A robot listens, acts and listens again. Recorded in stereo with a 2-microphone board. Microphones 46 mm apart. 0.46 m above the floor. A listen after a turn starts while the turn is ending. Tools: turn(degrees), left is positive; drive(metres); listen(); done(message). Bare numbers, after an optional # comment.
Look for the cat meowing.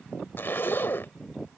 listen()
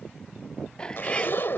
# The cat meowing: about 20° left or 160° left.
turn(20)
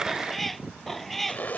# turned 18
turn(30)
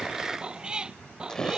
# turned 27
# So it is at 15° right.
turn(-15)
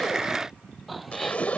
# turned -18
listen()
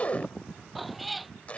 done("Found it: a cat meowing, straight ahead.")